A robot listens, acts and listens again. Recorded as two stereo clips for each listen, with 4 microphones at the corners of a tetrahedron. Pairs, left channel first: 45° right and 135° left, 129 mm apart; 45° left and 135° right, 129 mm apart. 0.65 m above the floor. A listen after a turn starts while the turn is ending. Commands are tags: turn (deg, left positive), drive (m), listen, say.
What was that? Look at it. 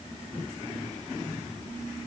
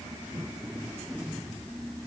<listen/>
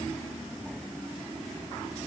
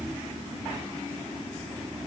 <listen/>
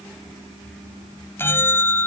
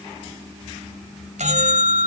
<turn deg="-115"/>
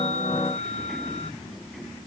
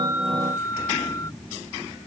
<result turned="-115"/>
<turn deg="-20"/>
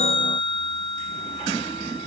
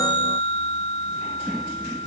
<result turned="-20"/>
<say>Found it: a bell, straight ahead.</say>